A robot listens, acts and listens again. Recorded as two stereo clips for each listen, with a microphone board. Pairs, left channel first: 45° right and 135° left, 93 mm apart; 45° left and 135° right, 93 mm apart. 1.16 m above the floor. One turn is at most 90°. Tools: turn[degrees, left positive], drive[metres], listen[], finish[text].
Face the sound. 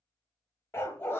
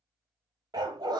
Thought: The dog barking: 105° right.
Action: turn[-90]
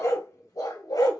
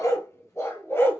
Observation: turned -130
Thought: The dog barking is now 15° right.
Action: turn[-15]
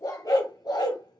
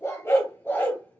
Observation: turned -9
Thought: The dog barking is now 20° right.
Action: turn[-20]
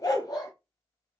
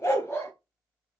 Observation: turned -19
Thought: The dog barking is now 10° right.
Action: turn[-10]
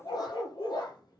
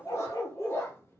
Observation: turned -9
Thought: The dog barking is now 10° right.
Action: turn[-10]
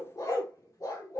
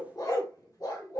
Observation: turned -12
Action: finish[Facing the dog barking.]